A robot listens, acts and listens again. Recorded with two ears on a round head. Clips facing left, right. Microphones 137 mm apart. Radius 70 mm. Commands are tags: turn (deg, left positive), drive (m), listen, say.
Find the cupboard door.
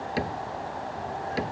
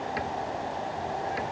<turn deg="35"/>
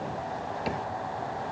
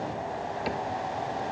<say>Facing the cupboard door.</say>